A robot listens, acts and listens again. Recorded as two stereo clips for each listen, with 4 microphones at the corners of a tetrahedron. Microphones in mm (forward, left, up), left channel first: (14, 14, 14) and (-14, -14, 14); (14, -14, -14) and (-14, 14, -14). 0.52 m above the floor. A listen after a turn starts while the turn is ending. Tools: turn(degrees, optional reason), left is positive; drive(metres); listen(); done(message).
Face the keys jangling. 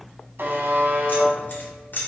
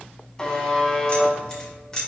turn(degrees=25, reason="The keys jangling: 25° left.")
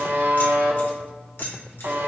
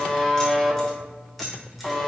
listen()
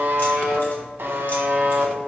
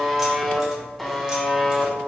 listen()
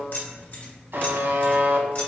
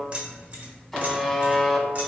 turn(degrees=80, reason="The keys jangling is now 80° left.")
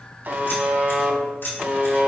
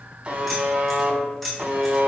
turn(degrees=35, reason="The keys jangling is now 35° left.")
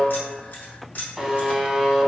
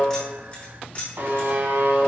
done("Facing the keys jangling, 1 to 2 m away.")